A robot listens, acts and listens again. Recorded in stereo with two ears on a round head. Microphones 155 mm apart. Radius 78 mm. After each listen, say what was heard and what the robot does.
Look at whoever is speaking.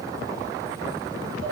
Keep listening.
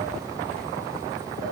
Keep listening.
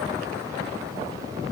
I can't make out anyone speaking.